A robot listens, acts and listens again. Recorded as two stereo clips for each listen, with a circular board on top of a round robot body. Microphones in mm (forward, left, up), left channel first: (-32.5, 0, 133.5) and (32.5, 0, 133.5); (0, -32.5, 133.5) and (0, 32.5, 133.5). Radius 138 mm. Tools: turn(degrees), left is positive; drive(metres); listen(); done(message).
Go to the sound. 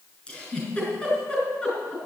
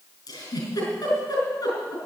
turn(degrees=-110)
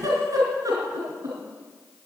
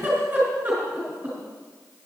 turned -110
turn(degrees=25)
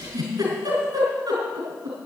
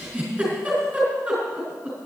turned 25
turn(degrees=15)
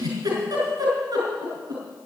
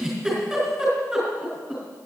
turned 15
drive(metres=1.0)
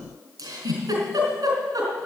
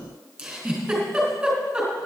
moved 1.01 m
turn(degrees=10)
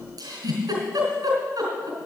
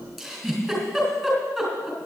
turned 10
drive(metres=1.0)
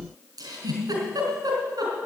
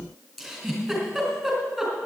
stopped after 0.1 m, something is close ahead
done("Something is in my way. I am facing the giggle but have not reached it.")